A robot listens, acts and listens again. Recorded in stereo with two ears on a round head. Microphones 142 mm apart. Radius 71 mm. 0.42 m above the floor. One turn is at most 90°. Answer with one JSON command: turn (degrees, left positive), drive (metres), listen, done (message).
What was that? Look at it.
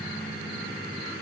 {"listen": true}
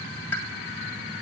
{"turn": 30}
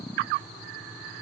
{"listen": true}
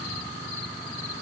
{"done": "I heard a pop, but can't make it out now. It was about 15° right or 135° left."}